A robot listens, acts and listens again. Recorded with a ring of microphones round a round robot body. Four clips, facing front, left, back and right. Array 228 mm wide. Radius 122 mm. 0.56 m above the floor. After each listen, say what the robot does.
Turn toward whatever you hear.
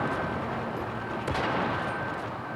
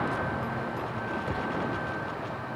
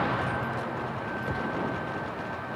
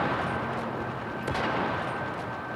Keep listening.
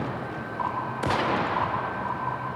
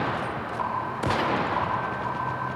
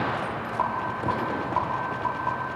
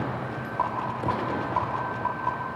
Turn 140° right.
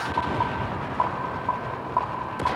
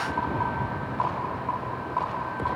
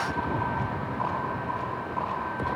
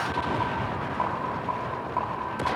Turn 30° right.
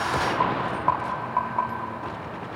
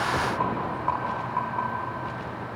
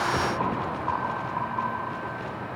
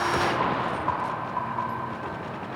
Facing the rattle.